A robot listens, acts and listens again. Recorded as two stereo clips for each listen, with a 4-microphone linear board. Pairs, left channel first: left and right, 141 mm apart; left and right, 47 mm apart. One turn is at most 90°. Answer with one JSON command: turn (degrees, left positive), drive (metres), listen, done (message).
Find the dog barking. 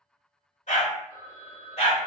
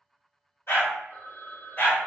{"turn": 50}
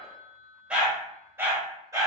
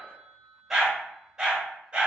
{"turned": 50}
{"turn": -25}
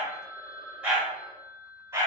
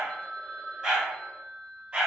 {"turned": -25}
{"turn": -20}
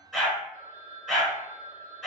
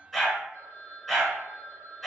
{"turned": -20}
{"done": "Facing the dog barking, 1 to 2 m away."}